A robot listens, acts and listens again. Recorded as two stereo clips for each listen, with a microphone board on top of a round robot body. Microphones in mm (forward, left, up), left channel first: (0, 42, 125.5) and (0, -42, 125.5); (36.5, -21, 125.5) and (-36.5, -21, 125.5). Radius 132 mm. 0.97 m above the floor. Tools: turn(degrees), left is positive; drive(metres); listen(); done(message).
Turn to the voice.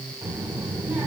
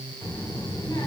turn(degrees=-25)
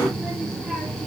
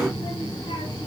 done("Facing the child speaking.")